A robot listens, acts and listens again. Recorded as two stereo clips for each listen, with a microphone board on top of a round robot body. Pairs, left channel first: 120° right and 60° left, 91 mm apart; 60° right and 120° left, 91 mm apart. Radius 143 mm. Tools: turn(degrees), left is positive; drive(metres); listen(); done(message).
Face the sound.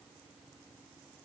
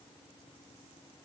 listen()
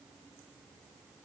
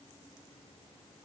listen()
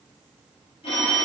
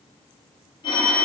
turn(degrees=-100)
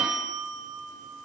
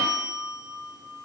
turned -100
turn(degrees=-20)
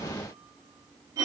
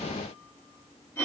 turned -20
done("Facing the phone ringing, under 1 m away.")